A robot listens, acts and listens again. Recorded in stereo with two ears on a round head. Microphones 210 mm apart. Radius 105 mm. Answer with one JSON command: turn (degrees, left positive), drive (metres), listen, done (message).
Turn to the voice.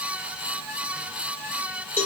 {"listen": true}
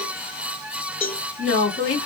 {"turn": 55}
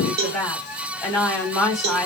{"done": "Facing the woman speaking, 2 to 4 m away."}